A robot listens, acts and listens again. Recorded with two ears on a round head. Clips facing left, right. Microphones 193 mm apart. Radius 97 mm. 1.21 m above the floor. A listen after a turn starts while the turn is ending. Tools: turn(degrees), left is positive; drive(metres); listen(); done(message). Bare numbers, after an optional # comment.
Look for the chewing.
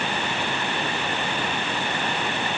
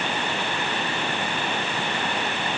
listen()
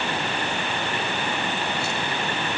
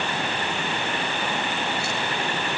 listen()
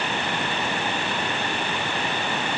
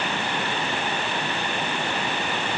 done("I can't make out chewing to turn to.")